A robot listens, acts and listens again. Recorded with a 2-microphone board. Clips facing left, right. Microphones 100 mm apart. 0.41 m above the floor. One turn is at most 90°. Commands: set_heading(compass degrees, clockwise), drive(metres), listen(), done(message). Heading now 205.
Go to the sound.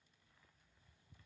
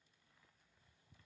listen()
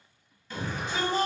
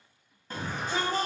set_heading(245)
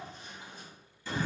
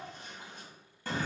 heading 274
set_heading(339)
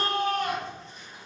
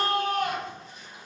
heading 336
drive(1.0)
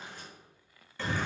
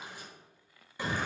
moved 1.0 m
set_heading(351)
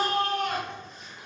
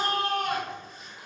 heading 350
drive(1.0)
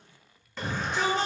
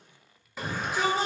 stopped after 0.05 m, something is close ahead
done("I am next to the shout.")